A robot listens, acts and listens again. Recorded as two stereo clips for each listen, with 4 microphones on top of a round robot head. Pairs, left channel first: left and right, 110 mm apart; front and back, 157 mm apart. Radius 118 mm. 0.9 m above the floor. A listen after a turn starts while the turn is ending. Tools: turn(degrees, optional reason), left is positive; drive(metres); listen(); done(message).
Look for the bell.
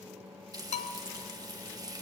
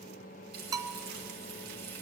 turn(degrees=110, reason="The bell: 110° left.")
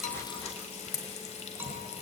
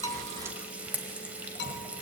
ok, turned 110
listen()
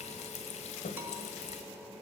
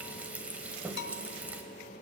turn(degrees=-15, reason="The bell is now 15° right.")
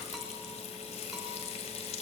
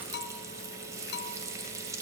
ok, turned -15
done("Found it: a bell, straight ahead.")